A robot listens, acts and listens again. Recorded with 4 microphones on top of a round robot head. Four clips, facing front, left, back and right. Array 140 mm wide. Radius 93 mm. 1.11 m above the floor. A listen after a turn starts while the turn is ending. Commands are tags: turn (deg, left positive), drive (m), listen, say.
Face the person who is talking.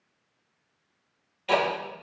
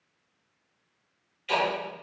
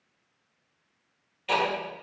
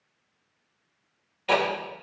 <listen/>
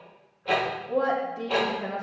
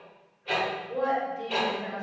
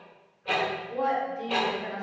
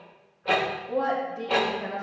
<turn deg="-45"/>
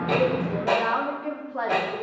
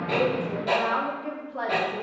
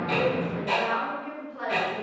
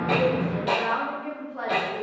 <turn deg="15"/>
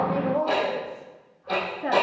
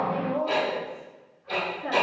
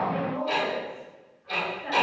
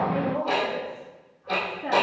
<say>Facing the woman speaking, 2 to 4 m away.</say>